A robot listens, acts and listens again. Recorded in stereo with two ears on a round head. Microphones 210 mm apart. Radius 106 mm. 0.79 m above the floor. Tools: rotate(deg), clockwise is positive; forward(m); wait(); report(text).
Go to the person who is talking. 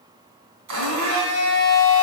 wait()
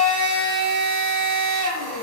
wait()
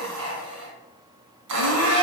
report("I can't make out anyone speaking, only a blender.")